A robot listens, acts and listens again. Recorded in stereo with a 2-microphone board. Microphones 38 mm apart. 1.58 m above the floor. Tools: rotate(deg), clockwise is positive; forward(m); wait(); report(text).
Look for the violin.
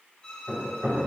rotate(-30)
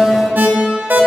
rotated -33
wait()
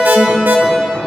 wait()
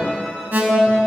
report("I heard a violin, but can't make it out now. It was about straight ahead or 115° left.")